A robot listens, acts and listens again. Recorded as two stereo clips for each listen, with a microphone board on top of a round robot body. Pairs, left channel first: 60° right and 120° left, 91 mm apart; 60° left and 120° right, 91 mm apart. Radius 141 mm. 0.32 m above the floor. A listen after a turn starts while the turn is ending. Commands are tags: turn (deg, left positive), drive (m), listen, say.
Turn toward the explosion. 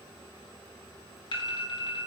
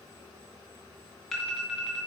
<listen/>
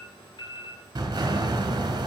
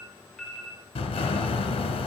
<turn deg="75"/>
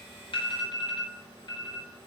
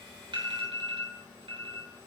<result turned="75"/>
<say>Facing where the explosion came from. I can't hear it now.</say>